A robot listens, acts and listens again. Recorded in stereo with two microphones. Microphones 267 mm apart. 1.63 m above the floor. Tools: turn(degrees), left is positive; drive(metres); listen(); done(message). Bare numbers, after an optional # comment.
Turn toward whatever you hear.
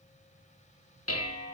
# The dishes clattering: about 60° left or 120° left.
turn(60)
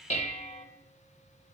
# So it is at 30° left.
turn(30)
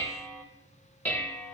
# The dishes clattering is now 10° left.
turn(10)
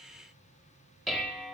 done("Found it: dishes clattering, straight ahead, 1 to 2 m away.")